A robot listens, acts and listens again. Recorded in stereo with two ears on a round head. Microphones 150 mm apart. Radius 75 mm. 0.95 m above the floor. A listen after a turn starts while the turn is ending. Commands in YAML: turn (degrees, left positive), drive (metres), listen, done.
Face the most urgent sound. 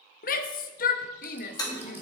turn: 55
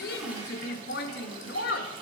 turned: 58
turn: 65
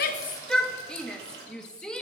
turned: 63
done: "Found it: a shout, straight ahead, under 1 m away."